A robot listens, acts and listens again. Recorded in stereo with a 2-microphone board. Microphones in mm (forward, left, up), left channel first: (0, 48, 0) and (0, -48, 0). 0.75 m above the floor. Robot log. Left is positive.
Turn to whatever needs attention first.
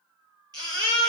note: The baby crying: about 45° right or 135° right.
cmd yaw -45
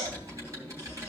note: So it is at 90° right.
cmd yaw -90
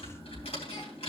cmd idle
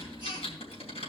cmd idle
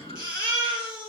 note: The baby crying is now 35° left.
cmd yaw +35
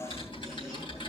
cmd idle
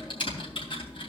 cmd idle
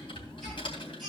end: I heard a baby crying from this way, but can't make it out now.